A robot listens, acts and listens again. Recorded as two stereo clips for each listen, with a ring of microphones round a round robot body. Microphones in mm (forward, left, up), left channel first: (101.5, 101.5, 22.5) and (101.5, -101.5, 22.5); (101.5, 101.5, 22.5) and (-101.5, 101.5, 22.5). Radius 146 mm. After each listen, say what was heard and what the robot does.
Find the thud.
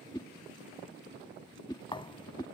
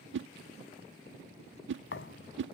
The thud: 25° left. Turn 25° left.
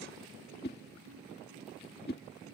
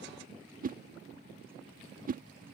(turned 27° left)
Facing where the thud came from. I can't hear it now.